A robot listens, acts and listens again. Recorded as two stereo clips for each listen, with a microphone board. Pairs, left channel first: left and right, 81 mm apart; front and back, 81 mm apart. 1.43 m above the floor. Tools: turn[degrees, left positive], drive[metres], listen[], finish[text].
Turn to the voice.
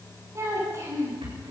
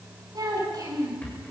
Thought: The child speaking: 145° right.
Action: turn[-145]
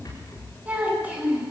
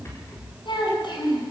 Thought: The child speaking is now 15° right.
Action: turn[-15]
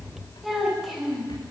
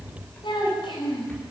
Action: finish[Facing the child speaking.]